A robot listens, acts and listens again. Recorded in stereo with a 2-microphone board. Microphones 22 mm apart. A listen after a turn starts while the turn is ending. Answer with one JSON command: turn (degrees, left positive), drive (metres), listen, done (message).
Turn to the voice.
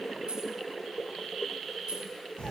{"listen": true}
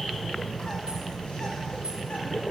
{"listen": true}
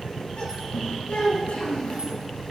{"turn": 65}
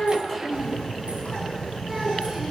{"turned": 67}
{"listen": true}
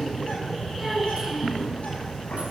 {"listen": true}
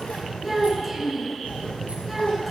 {"done": "Found it: a child speaking, straight ahead."}